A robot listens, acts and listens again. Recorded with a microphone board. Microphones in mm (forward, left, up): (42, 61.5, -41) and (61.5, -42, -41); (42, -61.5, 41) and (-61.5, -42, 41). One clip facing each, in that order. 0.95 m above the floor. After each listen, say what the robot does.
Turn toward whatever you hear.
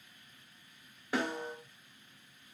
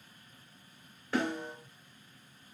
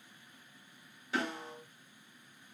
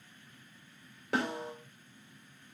Turn 175° left.
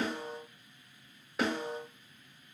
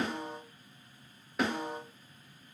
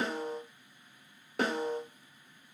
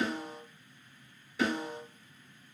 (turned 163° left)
Turn 10° left.
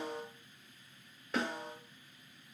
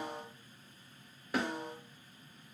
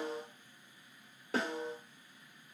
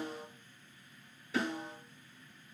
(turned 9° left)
Found it: a snare drum, straight ahead, 2 to 4 m away.